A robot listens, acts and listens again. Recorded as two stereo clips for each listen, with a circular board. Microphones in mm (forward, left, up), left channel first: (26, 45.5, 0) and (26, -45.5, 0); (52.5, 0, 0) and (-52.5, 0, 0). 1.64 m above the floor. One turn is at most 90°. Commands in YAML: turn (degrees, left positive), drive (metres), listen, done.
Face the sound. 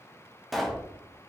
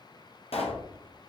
done: "Found it: a pop, straight ahead, under 1 m away."